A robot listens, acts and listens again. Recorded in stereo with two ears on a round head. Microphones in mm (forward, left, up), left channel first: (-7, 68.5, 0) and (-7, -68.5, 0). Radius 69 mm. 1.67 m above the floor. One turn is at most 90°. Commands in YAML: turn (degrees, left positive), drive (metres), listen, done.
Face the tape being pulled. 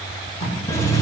turn: 35
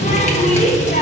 listen: true
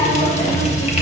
listen: true
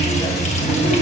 done: "I heard tape being pulled, but can't make it out now. It was about straight ahead or 110° left."